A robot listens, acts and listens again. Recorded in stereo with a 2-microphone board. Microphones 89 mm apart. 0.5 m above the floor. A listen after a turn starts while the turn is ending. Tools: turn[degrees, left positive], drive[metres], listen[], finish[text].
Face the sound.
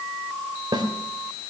Thought: The snare drum: about 50° right or 130° right.
Action: turn[-50]
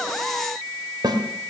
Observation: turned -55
Thought: So it is at 60° right.
Action: turn[-60]
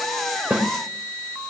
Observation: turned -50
Thought: The snare drum is now 10° right.
Action: turn[-10]
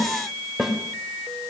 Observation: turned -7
Action: finish[Facing the snare drum, 1 to 2 m away.]